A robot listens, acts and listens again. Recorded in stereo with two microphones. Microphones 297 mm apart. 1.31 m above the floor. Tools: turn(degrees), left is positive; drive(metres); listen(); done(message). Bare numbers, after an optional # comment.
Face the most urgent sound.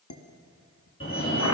# The fire alarm: about 40° left or 140° left.
turn(40)
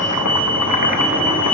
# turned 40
done("Facing the fire alarm.")